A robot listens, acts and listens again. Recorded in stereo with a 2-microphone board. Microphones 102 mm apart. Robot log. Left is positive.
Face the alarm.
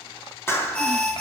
cmd yaw +30
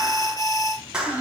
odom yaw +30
note: So it is at 140° left.
cmd yaw +140
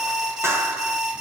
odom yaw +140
note: The alarm is now 10° right.
cmd yaw -10
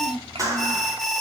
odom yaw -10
end: Found it: an alarm, straight ahead, 2 to 4 m away.